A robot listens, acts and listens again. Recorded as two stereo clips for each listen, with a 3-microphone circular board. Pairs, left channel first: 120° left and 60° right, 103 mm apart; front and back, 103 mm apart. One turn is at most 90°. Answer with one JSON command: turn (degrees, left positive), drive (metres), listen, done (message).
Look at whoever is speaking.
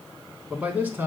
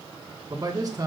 {"turn": -90}
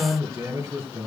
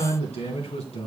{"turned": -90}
{"done": "Found it: a man speaking, straight ahead, 2 to 4 m away."}